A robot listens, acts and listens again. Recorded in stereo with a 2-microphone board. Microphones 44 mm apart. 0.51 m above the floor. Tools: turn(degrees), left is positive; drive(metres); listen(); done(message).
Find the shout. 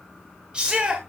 turn(degrees=-25)
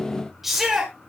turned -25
turn(degrees=-10)
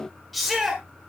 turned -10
done("Found it: a shout, straight ahead, 1 to 2 m away.")